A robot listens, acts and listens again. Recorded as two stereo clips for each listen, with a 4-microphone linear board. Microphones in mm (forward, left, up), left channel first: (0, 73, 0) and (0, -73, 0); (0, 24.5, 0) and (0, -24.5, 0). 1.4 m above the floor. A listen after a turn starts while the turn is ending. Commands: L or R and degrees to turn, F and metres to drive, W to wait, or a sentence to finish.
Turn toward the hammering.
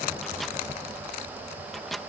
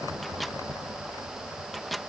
W
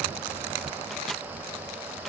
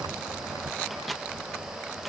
W
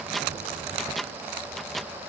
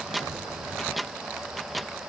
I can't make out hammering, only a microwave.